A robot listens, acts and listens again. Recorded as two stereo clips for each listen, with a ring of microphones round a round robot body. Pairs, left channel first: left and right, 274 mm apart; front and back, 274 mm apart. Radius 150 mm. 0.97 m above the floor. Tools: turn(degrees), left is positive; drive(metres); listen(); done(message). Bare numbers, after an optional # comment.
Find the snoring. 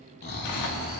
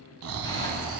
# The snoring: 145° left.
turn(145)
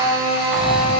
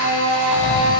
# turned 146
done("Facing the snoring.")